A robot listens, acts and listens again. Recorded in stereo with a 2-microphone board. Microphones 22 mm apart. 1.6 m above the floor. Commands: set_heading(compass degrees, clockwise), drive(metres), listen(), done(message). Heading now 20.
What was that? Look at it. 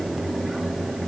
listen()
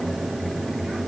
listen()
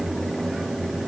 done("I can't make out anything to turn to.")